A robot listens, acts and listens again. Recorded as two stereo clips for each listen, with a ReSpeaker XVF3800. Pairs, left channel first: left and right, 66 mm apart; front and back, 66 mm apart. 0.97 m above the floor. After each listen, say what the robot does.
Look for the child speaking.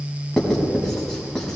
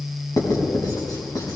Keep listening.
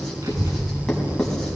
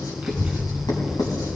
Turn 90° right.
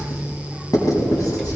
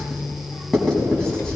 Facing the child speaking.